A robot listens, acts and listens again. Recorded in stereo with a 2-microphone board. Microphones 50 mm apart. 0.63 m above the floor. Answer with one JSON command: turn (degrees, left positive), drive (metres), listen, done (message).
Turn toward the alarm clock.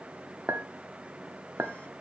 {"listen": true}
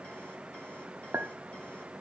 {"listen": true}
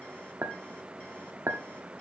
{"done": "I can't make out an alarm clock, only a clink."}